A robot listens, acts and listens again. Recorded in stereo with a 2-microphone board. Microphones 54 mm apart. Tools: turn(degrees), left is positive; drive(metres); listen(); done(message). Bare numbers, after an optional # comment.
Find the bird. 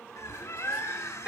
# The bird: about 70° left or 110° left.
turn(70)
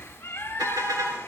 # So it is at 40° left.
turn(40)
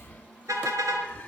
# The bird is now 25° left.
turn(25)
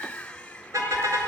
# The bird is now 20° left.
turn(20)
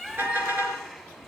# The bird is now 10° right.
turn(-10)
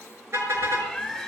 done("Facing the bird, 1 to 2 m away.")